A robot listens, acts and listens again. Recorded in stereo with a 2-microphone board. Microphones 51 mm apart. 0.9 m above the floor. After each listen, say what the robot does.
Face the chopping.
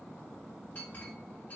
Keep listening.
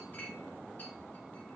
Keep listening.
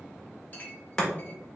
Turn 30° left.
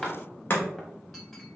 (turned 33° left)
Turn 130° left.
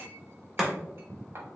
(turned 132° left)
Facing the chopping.